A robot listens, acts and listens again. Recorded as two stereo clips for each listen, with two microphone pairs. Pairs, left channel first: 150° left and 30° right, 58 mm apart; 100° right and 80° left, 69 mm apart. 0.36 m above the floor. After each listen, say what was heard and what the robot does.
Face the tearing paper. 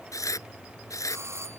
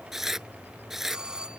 The tearing paper: 160° left. Turn 160° left.
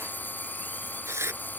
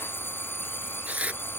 Found it: tearing paper, straight ahead.